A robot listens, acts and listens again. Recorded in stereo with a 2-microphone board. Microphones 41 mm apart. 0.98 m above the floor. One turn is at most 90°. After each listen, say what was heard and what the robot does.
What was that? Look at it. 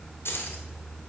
Turn 90° left.
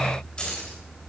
So it is at 25° left. Turn 25° left.
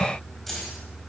Keep listening.
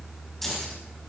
The keys jangling is now 10° left. Turn 10° left.
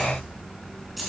Facing the keys jangling, over 4 m away.